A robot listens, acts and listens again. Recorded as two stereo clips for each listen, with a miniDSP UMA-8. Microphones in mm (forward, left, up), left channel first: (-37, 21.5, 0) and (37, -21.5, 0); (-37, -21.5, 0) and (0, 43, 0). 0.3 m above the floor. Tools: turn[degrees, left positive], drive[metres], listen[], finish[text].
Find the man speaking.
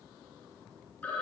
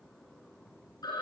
Action: listen[]
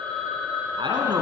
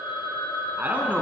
Action: finish[Facing the man speaking, 2 to 4 m away.]